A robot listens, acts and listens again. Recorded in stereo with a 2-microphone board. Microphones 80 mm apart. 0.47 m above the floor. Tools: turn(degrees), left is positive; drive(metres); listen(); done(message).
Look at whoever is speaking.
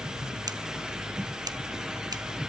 listen()
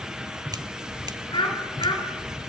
turn(degrees=75)
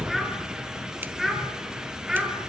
done("Found it: a child speaking, straight ahead.")